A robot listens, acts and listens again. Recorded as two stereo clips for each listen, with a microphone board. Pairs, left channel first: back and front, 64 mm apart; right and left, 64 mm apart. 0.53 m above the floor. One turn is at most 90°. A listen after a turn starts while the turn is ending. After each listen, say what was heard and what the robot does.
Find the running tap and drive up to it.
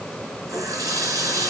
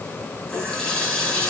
The running tap: 20° right. Turn 20° right.
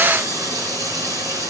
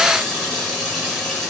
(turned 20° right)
Drive 1.0 m forward.
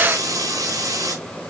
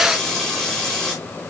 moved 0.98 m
The running tap is now 10° right. Turn 10° right.
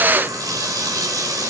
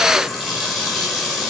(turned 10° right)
Drive 1.0 m forward.
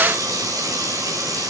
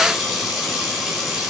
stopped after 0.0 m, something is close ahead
Blocked. The running tap is further on, straight ahead.